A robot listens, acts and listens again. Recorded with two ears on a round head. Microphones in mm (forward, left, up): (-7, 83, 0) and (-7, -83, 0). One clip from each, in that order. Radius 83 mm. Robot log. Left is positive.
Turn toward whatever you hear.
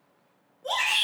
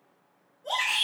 note: The shout: about 50° left or 130° left.
cmd yaw +50
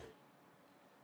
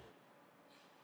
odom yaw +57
cmd idle
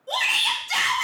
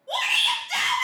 note: So it is at 70° left.
cmd yaw +70
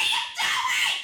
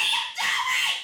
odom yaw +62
note: The shout is now 10° left.
cmd yaw +10
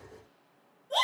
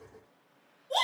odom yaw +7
end: Facing the shout, 1 to 2 m away.